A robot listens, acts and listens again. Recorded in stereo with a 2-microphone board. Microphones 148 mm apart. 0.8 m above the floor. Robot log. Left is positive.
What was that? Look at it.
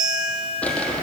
cmd yaw +30
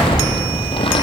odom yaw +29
note: So it is at 145° left.
cmd yaw +145
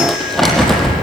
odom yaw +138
end: Found it: crumpling, straight ahead.